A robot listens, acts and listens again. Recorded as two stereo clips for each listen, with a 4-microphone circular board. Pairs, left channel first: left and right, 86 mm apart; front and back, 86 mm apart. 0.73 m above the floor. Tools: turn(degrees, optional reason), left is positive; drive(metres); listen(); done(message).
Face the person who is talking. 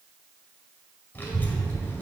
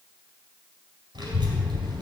turn(degrees=155, reason="The child speaking: 155° left.")
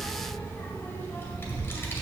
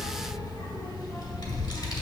turn(degrees=30, reason="The child speaking is now 30° left.")
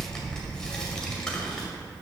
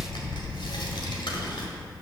turn(degrees=10, reason="The child speaking is now 10° left.")
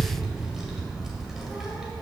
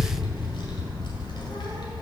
done("Facing the child speaking.")